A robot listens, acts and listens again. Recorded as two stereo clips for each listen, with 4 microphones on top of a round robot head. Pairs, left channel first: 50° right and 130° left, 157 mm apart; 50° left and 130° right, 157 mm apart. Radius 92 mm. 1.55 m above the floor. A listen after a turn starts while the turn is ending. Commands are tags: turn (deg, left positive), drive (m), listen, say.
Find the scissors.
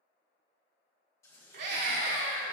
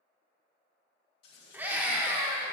<turn deg="25"/>
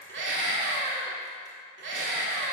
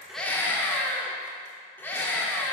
<listen/>
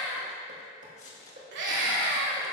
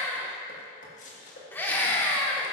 <say>Facing the scissors, 2 to 4 m away.</say>